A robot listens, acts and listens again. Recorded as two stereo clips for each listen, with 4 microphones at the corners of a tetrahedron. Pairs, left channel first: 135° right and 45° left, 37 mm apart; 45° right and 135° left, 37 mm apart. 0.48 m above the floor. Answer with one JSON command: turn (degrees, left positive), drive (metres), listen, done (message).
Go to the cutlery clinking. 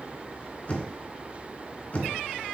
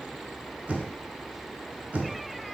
{"listen": true}
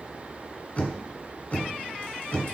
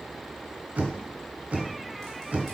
{"listen": true}
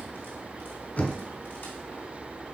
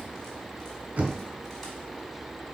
{"done": "I can't make out cutlery clinking, only knocking."}